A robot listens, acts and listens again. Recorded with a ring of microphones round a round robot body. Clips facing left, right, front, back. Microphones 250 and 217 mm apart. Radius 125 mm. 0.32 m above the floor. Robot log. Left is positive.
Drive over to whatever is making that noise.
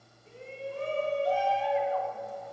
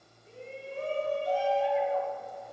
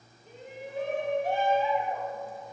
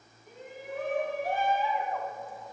note: The shout: 65° left.
cmd yaw +65
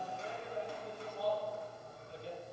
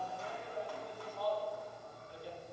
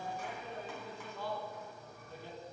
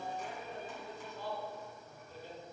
note: The shout is now 25° left.
cmd yaw +25
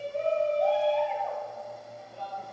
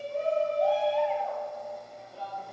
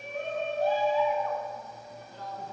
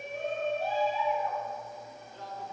cmd fwd 1.0
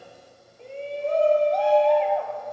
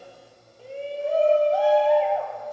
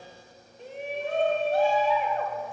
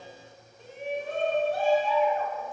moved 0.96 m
cmd fwd 1.0
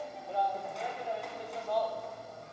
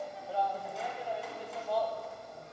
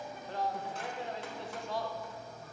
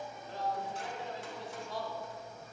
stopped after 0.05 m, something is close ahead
end: I am next to the shout.